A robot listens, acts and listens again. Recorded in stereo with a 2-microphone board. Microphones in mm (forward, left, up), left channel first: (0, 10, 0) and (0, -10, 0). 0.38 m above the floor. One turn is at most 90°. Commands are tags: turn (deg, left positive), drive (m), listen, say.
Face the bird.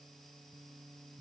<listen/>
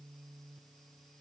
<listen/>
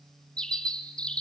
<turn deg="60"/>
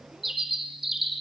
<say>Facing the bird.</say>